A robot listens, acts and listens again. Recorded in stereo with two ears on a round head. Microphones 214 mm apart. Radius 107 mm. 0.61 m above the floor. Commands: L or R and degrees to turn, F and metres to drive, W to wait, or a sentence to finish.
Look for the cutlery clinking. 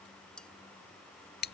L30
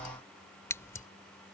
W
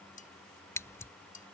L145
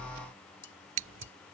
L75
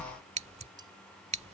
W
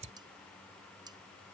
W
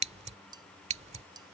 R20
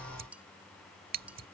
Facing the cutlery clinking.